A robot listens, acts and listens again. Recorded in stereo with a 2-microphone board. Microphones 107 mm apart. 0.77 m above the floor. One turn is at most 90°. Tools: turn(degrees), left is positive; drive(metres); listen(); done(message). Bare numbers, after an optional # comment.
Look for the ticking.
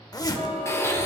# The ticking: about 60° right or 120° right.
turn(-60)
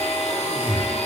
listen()
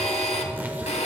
listen()
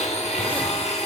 done("I heard ticking, but can't make it out now. It was about straight ahead or 60° right.")